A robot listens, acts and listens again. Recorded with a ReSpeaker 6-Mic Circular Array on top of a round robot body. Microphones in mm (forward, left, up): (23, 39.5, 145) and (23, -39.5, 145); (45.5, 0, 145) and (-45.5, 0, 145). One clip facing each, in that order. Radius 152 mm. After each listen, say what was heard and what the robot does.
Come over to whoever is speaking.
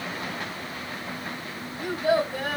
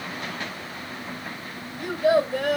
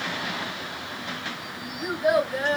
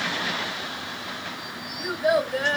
The child speaking: 90° right. Turn 90° right.
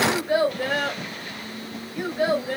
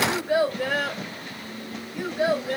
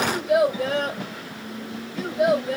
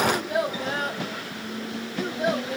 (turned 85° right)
Drive 1.0 m forward.
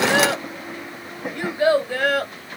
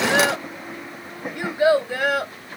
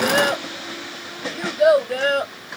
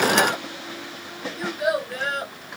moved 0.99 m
The child speaking is now 15° right. Turn 15° right.
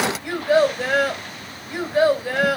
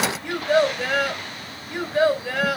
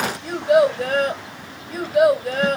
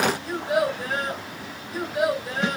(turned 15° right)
Drive 1.0 m forward.
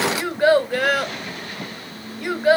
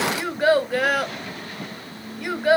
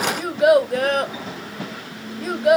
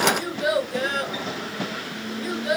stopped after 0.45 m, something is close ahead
Arrived at the child speaking, straight ahead.